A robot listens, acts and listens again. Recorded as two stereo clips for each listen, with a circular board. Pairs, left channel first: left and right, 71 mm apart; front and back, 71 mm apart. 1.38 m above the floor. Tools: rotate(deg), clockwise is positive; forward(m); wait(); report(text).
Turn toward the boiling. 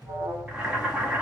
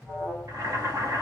rotate(165)
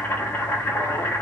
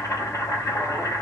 rotate(-30)
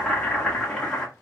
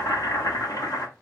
rotate(-15)
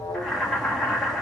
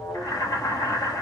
report("Found it: boiling, straight ahead.")